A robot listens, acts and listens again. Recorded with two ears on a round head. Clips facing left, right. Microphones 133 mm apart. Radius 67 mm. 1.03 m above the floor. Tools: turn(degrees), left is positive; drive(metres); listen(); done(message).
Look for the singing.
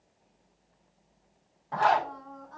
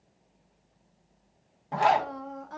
turn(degrees=-90)
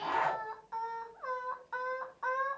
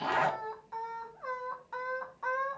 done("Found it: singing, straight ahead.")